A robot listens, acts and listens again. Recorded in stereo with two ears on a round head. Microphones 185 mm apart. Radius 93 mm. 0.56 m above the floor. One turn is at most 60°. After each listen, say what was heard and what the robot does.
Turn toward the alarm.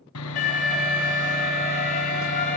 The alarm: about 40° left or 140° left. Turn 40° left.
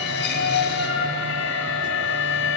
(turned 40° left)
So it is at 100° left. Turn 60° left.
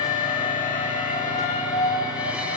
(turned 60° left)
The alarm is now 40° left. Turn 40° left.
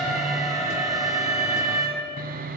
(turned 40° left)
Found it: an alarm, straight ahead, over 4 m away.